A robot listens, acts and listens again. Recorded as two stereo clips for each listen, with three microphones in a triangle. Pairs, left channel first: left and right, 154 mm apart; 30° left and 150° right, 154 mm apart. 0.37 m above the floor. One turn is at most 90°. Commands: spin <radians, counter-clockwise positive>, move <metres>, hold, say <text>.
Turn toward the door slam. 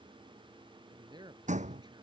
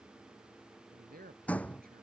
spin -0.87
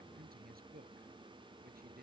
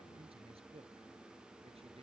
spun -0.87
say Facing where the door slam came from. I can't hear it now.